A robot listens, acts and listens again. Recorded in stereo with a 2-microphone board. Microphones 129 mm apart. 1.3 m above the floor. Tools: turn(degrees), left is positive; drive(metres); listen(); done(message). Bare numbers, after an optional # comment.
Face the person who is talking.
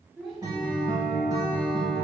turn(30)
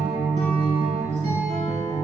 listen()
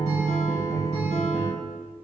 listen()
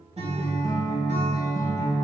done("I heard a child speaking, but can't make it out now. It was about 30° right or 150° left.")